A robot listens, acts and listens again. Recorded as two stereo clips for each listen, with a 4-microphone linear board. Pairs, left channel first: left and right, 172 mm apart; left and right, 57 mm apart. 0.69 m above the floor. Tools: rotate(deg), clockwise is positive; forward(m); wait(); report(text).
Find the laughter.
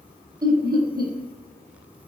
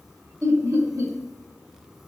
rotate(60)
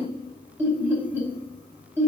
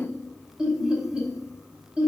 rotate(15)
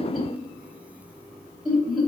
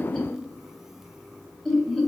report("Facing the laughter.")